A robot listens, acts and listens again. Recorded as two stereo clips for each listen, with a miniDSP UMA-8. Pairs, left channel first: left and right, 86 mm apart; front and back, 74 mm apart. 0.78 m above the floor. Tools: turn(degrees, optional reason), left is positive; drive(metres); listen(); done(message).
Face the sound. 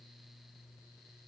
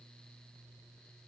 listen()
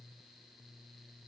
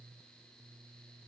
listen()
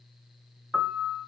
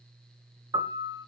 turn(degrees=180, reason="The piano: straight behind.")
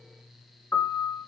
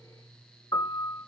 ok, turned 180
turn(degrees=25, reason="The piano is now 25° left.")
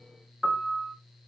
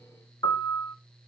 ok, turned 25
done("Facing the piano, 2 to 4 m away.")